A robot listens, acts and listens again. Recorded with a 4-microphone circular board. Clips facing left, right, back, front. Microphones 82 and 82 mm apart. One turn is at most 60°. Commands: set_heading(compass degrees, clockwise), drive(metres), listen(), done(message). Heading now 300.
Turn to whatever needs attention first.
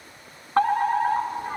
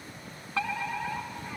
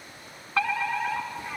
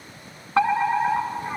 set_heading(240)
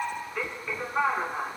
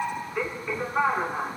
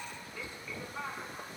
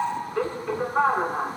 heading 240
set_heading(250)
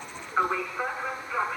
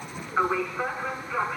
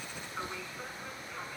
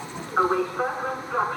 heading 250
done("Found it: a fire alarm, straight ahead.")